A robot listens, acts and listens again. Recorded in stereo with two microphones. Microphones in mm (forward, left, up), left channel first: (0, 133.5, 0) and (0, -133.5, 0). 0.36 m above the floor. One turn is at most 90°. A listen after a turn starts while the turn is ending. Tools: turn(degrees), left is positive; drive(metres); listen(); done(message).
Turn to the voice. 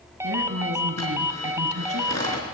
turn(degrees=-65)
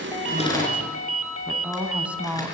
done("Found it: a woman speaking, straight ahead, 2 to 4 m away.")